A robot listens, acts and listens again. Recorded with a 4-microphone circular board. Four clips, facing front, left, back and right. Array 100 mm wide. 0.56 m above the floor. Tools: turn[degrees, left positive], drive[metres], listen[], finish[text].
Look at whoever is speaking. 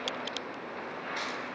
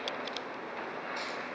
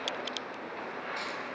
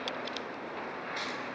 Action: listen[]
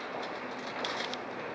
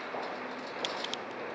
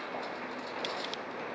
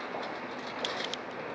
Action: listen[]
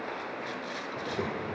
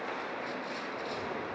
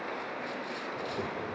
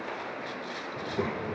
Thought: The child speaking: 70° right.
Action: turn[-70]
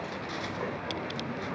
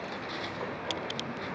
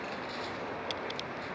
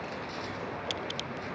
Thought: The child speaking is now 30° left.
Action: turn[30]
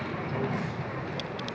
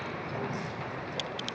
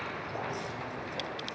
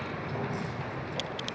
Action: finish[Facing the child speaking.]